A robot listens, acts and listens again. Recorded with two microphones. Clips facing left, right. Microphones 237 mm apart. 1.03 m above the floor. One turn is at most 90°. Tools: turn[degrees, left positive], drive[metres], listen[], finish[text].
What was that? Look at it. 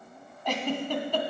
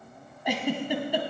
Action: turn[-30]
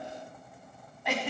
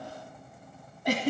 Thought: So it is at 135° right.
Action: turn[-90]
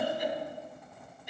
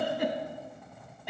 Thought: The giggle is now 95° right.
Action: turn[-90]
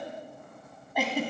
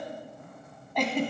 Action: finish[Found it: a giggle, straight ahead.]